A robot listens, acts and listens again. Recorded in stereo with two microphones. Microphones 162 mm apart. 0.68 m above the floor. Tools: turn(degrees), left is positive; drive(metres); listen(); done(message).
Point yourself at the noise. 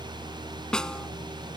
turn(degrees=30)
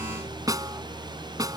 turn(degrees=-25)
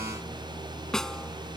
done("Found it: a snare drum, straight ahead.")